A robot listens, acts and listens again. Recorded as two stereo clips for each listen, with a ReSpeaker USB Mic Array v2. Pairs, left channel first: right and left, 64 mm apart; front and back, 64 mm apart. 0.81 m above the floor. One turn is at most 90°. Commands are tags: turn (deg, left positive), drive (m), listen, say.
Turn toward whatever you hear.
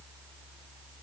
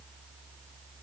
<listen/>
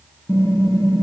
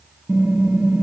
<turn deg="-90"/>
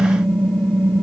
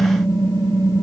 <turn deg="-20"/>
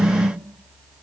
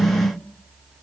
<say>Facing the typing on a keyboard, over 4 m away.</say>